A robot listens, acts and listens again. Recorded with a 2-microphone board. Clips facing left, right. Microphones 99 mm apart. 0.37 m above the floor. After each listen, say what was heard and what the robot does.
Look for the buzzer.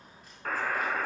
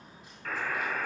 The buzzer: about 45° left or 135° left. Turn 45° left.
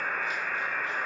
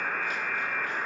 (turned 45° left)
Facing the buzzer.